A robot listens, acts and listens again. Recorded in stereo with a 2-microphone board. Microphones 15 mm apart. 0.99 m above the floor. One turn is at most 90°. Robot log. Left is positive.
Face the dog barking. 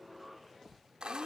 cmd idle
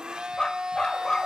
note: The dog barking: about 50° left or 130° left.
cmd yaw +50
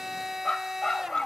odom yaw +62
note: So it is at 70° left.
cmd yaw +70
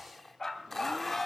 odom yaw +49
note: The dog barking is now 55° left.
cmd yaw +55
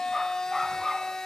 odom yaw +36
note: The dog barking is now 30° left.
cmd yaw +30
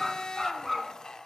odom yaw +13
note: The dog barking is now 20° left.
cmd yaw +20
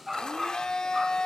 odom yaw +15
end: Facing the dog barking.